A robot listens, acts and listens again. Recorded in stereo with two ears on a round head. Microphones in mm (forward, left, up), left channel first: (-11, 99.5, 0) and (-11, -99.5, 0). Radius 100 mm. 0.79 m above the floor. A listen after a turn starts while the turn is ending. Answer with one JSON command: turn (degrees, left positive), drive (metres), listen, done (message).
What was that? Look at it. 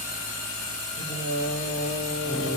{"turn": 25}
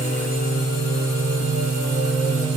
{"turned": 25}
{"turn": 30}
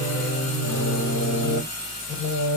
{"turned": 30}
{"turn": 135}
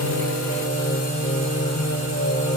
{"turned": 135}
{"turn": 25}
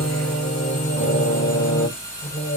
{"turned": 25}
{"turn": 15}
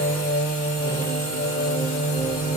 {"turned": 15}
{"done": "Facing the singing."}